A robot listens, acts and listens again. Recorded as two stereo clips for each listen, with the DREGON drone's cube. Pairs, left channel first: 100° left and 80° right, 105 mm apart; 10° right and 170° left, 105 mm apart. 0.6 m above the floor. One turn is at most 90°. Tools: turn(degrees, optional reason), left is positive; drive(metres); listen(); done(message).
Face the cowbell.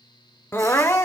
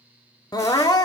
listen()
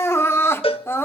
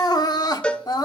turn(degrees=70, reason="The cowbell: 70° left.")
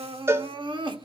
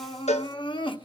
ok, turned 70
turn(degrees=-15, reason="The cowbell is now 15° right.")
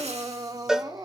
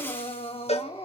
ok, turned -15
done("Facing the cowbell, under 1 m away.")